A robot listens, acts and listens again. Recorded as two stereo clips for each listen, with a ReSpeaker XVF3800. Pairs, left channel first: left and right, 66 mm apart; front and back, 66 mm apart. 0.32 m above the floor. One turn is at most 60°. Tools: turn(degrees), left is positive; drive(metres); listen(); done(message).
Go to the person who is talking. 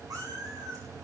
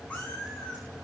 listen()
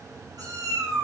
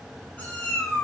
listen()
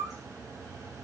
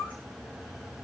done("I can't make out anyone speaking to turn to.")